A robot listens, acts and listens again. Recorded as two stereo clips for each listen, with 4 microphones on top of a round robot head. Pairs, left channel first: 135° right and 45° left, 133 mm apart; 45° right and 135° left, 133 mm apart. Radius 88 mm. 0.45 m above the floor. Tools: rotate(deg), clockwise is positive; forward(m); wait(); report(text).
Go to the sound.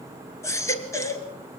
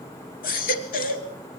rotate(65)
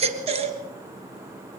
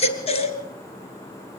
forward(1.0)
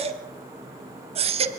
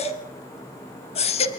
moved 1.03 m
forward(1.0)
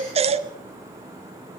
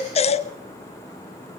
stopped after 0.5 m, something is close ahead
report("Arrived at the baby crying, straight ahead.")